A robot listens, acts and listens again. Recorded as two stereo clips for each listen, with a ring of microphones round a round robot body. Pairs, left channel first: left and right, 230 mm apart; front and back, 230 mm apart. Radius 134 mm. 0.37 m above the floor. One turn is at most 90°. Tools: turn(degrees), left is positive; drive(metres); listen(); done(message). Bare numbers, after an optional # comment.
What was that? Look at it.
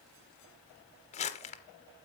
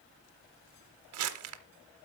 # The crumpling: 155° left.
turn(90)
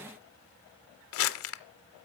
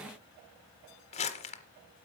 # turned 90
# The crumpling is now 65° left.
turn(65)
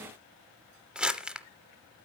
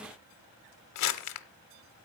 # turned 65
done("Facing the crumpling, under 1 m away.")